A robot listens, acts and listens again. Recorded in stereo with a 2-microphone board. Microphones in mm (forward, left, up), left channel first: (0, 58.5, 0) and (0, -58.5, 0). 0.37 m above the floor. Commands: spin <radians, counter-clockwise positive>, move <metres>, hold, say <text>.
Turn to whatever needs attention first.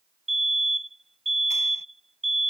spin -1.05
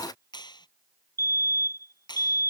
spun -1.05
spin -0.44
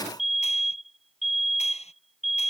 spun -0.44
say Found it: a fire alarm, straight ahead.